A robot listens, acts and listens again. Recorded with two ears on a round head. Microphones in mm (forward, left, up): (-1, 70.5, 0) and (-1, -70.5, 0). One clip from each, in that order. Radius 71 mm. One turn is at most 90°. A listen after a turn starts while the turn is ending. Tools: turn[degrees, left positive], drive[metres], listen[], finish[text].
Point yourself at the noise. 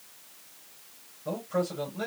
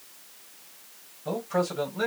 Thought: The man speaking: about 15° right or 165° right.
Action: turn[-15]
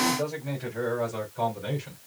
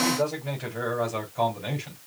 Thought: The man speaking: about 25° right or 155° right.
Action: turn[-25]
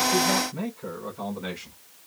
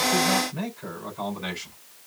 Thought: So it is at 135° right.
Action: turn[-90]
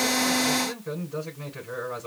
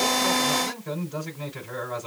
Thought: The man speaking is now 50° right.
Action: turn[-50]
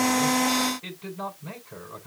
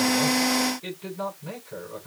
Thought: The man speaking is now 10° left.
Action: turn[10]
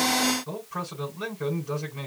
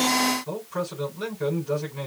Action: finish[Found it: a man speaking, straight ahead.]